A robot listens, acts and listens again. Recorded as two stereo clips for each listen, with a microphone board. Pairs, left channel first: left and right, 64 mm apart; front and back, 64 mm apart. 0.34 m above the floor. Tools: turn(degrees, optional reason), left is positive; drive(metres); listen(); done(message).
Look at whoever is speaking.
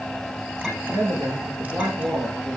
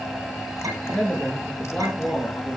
turn(degrees=-75, reason="The man speaking: 75° right.")
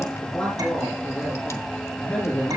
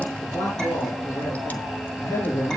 turn(degrees=20, reason="The man speaking is now 20° left.")
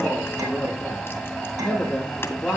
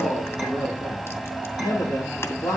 done("Found it: a man speaking, straight ahead.")